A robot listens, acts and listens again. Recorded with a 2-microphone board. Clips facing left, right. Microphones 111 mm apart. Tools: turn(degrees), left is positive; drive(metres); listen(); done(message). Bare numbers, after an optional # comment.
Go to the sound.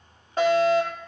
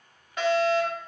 # The fire alarm: about 35° left or 145° left.
turn(35)
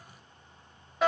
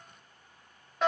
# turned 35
drive(1.0)
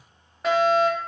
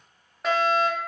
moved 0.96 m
drive(1.0)
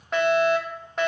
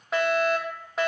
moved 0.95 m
drive(1.0)
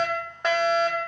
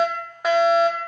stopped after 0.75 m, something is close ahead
done("Arrived at the fire alarm, straight ahead.")